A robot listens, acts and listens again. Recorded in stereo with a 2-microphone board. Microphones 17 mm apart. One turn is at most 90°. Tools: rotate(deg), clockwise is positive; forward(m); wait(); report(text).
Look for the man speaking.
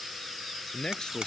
rotate(-50)
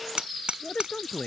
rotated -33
rotate(-90)
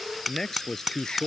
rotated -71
rotate(-25)
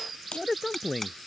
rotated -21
report("Facing the man speaking.")